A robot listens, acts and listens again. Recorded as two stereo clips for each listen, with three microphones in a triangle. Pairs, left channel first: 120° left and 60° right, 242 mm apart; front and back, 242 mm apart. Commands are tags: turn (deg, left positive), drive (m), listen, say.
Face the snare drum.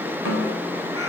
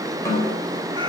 <turn deg="-75"/>
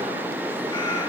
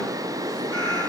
<listen/>
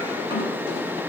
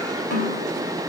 <turn deg="10"/>
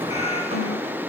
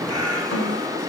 <listen/>
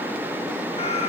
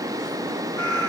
<listen/>
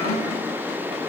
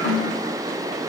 <say>Facing the snare drum, 2 to 4 m away.</say>